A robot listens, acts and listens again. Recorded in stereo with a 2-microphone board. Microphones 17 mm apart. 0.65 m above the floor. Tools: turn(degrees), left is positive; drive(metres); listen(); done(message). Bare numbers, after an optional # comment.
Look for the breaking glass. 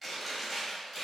listen()
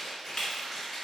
# The breaking glass: about 45° left or 135° left.
turn(45)
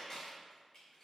listen()
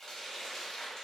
done("I heard breaking glass, but can't make it out now. It was about straight ahead or 90° left.")